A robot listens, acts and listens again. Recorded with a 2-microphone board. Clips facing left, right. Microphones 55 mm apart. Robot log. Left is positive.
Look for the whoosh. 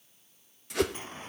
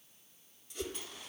cmd yaw +90
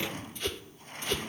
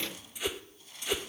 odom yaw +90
note: So it is at 10° right.
cmd yaw -10
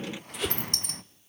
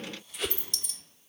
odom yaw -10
end: Facing the whoosh.